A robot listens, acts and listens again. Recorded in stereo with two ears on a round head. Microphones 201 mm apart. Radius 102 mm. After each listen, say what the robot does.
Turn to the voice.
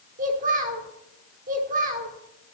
Turn 35° right.
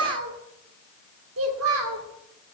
Turn 105° right.
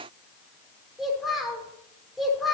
Facing the child speaking, 1 to 2 m away.